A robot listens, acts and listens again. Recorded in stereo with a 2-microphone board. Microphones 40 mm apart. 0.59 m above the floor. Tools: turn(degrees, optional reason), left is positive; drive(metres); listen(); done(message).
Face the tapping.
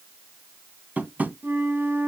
turn(degrees=-45, reason="The tapping: about 45° right or 135° right.")
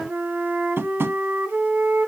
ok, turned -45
turn(degrees=-90, reason="So it is at 90° right.")
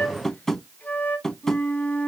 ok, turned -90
turn(degrees=10, reason="The tapping is now 10° left.")
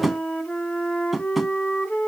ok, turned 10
done("Facing the tapping.")